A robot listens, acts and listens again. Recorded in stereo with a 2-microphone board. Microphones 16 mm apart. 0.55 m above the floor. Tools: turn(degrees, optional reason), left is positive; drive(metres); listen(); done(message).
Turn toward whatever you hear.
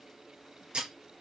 turn(degrees=-90)
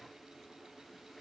done("I heard breaking glass from this way, but can't make it out now.")